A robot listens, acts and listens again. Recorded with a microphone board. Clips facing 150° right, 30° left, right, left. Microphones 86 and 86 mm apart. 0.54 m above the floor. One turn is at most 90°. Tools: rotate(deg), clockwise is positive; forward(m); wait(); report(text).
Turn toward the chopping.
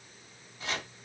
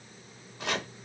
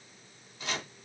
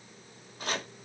rotate(-45)
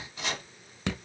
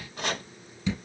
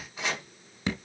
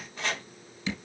rotate(10)
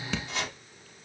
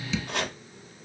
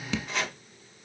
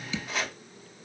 report("Found it: chopping, straight ahead, 1 to 2 m away.")